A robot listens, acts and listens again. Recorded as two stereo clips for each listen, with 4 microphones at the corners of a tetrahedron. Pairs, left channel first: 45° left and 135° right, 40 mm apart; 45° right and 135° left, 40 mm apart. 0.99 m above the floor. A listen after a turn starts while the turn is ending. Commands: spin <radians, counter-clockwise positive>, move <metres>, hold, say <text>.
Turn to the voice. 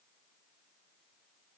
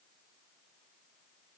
hold
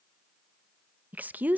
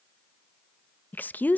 spin -1.48
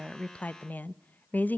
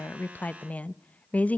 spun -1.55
say Facing the woman speaking, under 1 m away.